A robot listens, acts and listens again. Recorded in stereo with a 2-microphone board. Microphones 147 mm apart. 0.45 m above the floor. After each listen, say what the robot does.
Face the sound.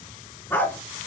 Turn 30° left.
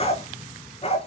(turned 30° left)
Turn 140° left.
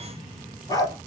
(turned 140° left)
Turn 25° left.
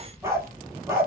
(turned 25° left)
Turn 15° right.
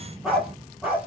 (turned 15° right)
Found it: a dog barking, straight ahead.